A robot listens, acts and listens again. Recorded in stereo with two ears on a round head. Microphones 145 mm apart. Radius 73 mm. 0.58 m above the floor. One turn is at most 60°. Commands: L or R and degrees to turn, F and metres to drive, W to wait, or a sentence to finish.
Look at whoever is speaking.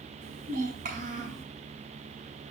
R50
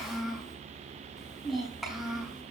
Facing the child speaking, over 4 m away.